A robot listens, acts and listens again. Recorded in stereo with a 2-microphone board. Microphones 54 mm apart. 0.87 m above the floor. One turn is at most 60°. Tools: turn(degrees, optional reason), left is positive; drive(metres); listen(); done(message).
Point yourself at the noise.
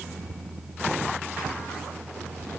listen()
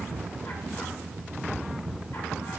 listen()
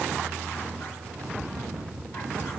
done("I can't make out anything.")